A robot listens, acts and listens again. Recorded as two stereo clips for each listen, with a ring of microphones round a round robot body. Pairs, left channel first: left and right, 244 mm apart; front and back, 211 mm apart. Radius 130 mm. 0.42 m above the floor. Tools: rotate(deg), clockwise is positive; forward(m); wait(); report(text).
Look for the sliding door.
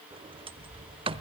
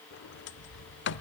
rotate(25)
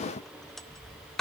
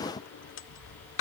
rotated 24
report("Facing the sliding door.")